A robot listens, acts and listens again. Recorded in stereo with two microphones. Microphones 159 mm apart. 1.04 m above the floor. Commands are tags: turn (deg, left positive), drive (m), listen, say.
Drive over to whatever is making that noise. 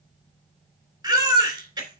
<turn deg="-25"/>
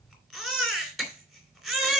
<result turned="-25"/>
<drive m="1.0"/>
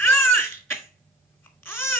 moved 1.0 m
<turn deg="15"/>
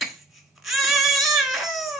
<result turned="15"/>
<drive m="1.0"/>
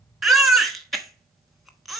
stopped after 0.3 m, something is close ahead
<say>I am next to the baby crying.</say>